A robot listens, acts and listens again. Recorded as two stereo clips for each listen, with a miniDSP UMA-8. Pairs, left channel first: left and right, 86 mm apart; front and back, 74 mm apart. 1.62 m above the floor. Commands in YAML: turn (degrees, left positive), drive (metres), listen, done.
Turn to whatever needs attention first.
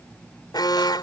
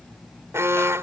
turn: 125
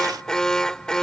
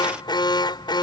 done: "Found it: an alarm, straight ahead."